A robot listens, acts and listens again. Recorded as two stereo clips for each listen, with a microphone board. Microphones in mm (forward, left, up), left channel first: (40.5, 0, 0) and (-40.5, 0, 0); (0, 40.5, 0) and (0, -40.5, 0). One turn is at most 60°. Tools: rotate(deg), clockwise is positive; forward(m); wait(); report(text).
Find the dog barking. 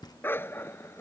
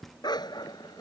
rotate(-60)
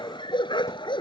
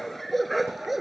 report("Found it: a dog barking, straight ahead.")